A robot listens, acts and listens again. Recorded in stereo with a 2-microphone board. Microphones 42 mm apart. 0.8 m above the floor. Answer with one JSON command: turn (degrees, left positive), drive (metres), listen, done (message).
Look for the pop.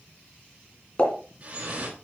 {"turn": 30}
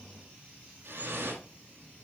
{"listen": true}
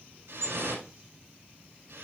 {"done": "I heard a pop, but can't make it out now. It was about straight ahead or 120° left."}